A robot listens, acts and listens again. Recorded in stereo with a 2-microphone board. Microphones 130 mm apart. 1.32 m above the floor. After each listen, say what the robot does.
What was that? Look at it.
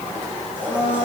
Turn 15° left.
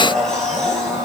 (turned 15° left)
Facing the blender.